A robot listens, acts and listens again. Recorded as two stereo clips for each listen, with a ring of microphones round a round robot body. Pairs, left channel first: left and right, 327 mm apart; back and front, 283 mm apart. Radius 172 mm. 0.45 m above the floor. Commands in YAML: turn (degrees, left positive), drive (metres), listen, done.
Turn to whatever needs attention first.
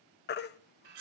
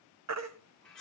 turn: 30
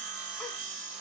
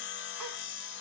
listen: true
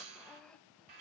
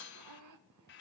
listen: true
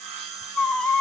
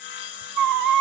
done: "Facing the baby crying, 1 to 2 m away."